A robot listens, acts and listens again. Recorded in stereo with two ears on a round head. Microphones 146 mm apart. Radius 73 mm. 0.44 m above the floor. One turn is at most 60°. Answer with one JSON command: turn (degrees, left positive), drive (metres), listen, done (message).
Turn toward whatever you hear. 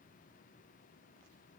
{"listen": true}
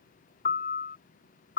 {"turn": 60}
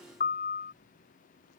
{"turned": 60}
{"turn": 55}
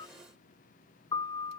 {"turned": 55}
{"turn": 25}
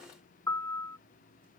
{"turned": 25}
{"turn": 15}
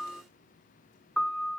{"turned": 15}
{"done": "Found it: a piano, straight ahead."}